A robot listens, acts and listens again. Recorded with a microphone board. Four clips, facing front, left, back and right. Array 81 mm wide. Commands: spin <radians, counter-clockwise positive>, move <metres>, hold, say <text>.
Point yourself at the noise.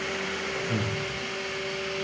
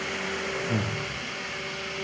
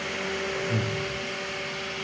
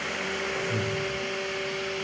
spin 1.40
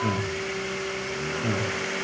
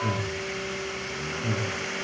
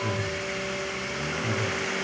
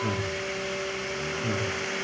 spin -0.17
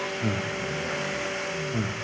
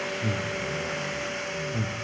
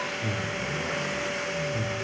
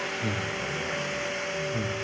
say Facing the breathing.